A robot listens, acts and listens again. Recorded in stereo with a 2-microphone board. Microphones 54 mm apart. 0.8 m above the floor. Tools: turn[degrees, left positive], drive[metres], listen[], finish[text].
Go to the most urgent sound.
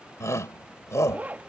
Thought: The shout: about 70° left or 110° left.
Action: turn[70]
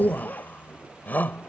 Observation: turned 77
Thought: So it is at 35° left.
Action: turn[35]
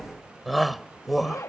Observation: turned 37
Action: drive[1.0]
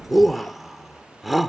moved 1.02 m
Action: drive[1.0]
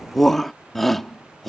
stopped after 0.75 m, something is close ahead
Action: finish[Arrived at the shout, straight ahead.]